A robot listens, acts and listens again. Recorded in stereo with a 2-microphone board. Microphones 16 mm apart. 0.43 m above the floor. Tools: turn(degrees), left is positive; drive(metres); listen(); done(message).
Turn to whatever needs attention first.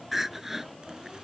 turn(degrees=-25)
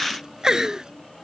turn(degrees=-135)
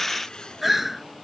done("Found it: crying, straight ahead.")